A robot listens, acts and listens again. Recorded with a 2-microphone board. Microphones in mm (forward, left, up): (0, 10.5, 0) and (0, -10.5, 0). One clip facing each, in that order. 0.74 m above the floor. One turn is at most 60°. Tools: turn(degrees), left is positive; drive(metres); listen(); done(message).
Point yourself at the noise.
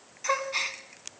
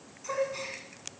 turn(degrees=50)
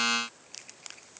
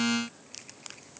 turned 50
listen()
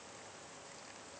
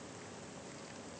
done("I heard a gasp, but can't make it out now. It was about straight ahead or 80° left.")